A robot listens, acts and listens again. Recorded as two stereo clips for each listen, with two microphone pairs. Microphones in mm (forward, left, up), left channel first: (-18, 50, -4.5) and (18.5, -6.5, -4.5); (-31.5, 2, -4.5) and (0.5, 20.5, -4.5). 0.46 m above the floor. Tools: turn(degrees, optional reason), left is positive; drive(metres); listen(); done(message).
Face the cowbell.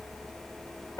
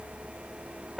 listen()
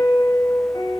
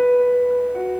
listen()
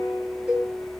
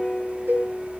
turn(degrees=15, reason="The cowbell: 15° left.")
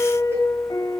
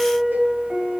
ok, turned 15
done("Found it: a cowbell, straight ahead.")